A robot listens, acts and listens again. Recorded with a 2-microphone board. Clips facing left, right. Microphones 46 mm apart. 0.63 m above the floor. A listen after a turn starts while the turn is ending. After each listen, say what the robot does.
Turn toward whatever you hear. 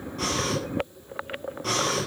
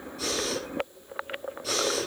Turn 60° left.
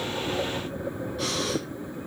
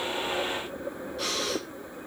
Found it: breathing, straight ahead.